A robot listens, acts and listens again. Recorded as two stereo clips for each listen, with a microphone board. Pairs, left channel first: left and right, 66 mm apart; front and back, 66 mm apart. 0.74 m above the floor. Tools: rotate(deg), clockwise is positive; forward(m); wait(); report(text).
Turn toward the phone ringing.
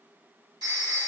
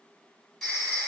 rotate(90)
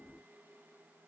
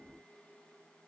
wait()
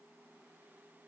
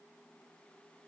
wait()
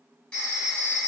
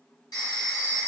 rotate(-10)
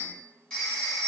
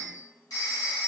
report("Found it: a phone ringing, straight ahead.")